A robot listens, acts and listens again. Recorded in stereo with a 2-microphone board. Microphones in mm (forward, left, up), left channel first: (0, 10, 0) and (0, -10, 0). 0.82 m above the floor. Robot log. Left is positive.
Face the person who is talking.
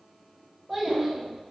cmd yaw -30
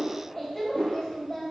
note: So it is at 20° left.
cmd yaw +20
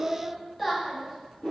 end: Facing the child speaking, under 1 m away.